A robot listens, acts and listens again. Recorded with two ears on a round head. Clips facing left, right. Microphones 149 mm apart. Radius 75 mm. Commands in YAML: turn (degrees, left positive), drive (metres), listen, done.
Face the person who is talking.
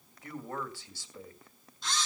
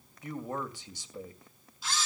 turn: -15
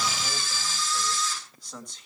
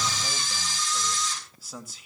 done: "Facing the man speaking, 2 to 4 m away."